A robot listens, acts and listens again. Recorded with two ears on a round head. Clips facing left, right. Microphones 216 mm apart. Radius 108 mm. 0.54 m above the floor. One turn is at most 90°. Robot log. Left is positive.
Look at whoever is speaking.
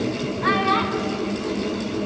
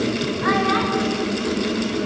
note: The child speaking: about 40° left or 140° left.
cmd yaw +40
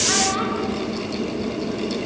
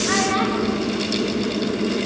end: Found it: a child speaking, straight ahead, 2 to 4 m away.